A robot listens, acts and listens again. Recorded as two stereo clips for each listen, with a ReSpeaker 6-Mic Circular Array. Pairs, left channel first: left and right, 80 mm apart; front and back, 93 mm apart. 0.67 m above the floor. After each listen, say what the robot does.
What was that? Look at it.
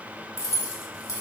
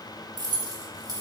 Turn 135° left.
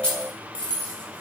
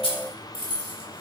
Turn 10° left.
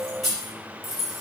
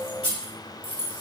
Facing the keys jangling.